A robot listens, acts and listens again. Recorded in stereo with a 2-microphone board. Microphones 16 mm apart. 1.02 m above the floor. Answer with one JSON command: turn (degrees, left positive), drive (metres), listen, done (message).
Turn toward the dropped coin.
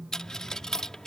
{"turn": 35}
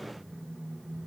{"listen": true}
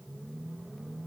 {"done": "I heard a dropped coin, but can't make it out now. It was about straight ahead or 110° left."}